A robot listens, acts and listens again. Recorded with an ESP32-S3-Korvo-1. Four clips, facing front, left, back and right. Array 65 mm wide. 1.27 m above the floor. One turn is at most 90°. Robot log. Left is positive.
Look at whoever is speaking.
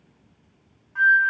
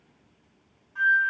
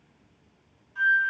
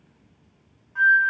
cmd idle
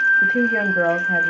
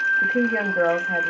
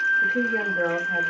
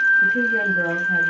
note: The woman speaking: 45° left.
cmd yaw +45
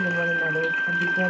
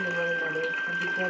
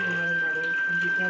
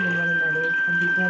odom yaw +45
cmd idle
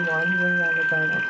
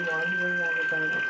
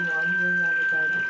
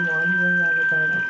cmd idle
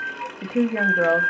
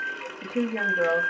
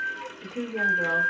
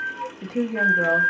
end: Facing the woman speaking, under 1 m away.